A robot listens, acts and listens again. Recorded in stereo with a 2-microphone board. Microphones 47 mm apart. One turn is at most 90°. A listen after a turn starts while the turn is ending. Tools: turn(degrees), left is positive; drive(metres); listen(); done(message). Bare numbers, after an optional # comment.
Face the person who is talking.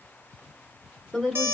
turn(30)
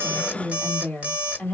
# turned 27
# So it is at 145° left.
turn(90)
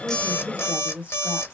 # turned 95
# The woman speaking is now 50° left.
turn(50)
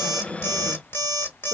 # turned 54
listen()
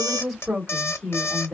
done("Found it: a woman speaking, straight ahead.")